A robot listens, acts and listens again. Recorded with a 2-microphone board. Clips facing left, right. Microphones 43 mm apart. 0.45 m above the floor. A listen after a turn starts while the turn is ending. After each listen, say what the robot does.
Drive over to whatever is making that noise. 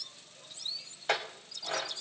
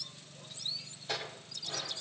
Turn 65° left.
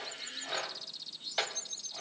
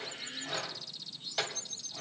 Turn 15° left.
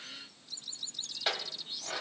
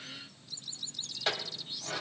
Drive 1.0 m forward.
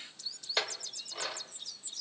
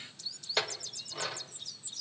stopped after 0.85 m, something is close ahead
Arrived at the clink, straight ahead.